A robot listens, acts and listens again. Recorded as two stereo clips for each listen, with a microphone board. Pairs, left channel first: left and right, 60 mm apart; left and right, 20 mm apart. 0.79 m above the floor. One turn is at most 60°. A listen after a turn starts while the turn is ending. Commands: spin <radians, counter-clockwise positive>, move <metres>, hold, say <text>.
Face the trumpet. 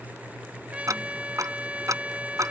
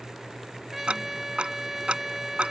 spin -0.35
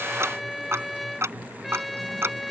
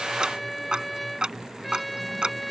say Found it: a trumpet, straight ahead.